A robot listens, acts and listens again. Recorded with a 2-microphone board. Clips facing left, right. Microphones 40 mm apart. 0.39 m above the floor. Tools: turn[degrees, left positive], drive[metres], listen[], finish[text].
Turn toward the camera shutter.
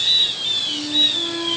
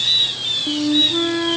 Action: listen[]
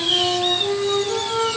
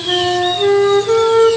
Action: listen[]
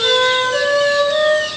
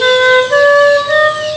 Action: finish[I can't make out a camera shutter to turn to.]